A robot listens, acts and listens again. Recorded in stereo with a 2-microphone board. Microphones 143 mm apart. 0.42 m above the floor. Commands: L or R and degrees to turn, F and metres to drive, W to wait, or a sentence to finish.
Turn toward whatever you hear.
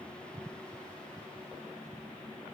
W
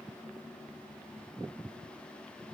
W
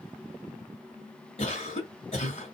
L50
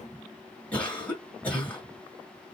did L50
L10
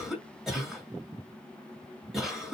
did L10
Facing the cough.